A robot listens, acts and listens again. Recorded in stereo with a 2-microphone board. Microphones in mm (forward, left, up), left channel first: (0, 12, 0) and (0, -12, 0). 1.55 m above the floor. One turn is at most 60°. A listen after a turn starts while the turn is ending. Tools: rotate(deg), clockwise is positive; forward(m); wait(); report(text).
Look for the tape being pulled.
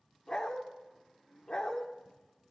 wait()
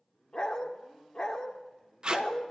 rotate(35)
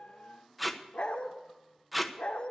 report("Found it: tape being pulled, straight ahead, 1 to 2 m away.")